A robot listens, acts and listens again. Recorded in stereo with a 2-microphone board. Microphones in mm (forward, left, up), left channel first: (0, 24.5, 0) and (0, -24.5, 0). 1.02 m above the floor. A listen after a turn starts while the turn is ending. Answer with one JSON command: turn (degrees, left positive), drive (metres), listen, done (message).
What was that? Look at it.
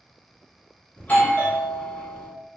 {"turn": 35}
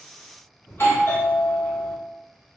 {"turn": 105}
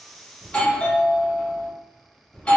{"turn": 30}
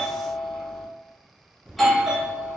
{"done": "Facing the doorbell, 1 to 2 m away."}